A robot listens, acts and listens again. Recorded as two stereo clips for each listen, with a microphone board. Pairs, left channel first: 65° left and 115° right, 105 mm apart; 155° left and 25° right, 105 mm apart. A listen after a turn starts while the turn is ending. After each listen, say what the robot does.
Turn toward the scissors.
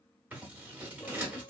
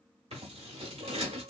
Turn 40° right.
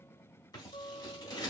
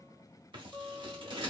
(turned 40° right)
Turn 15° left.
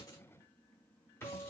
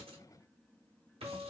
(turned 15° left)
Found it: scissors, straight ahead, 1 to 2 m away.